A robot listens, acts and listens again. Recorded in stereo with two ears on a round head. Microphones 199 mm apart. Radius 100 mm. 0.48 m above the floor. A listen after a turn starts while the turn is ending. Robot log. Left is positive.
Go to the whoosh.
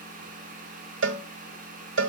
cmd idle
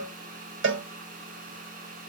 cmd idle
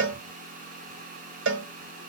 end: I can't make out a whoosh to turn to.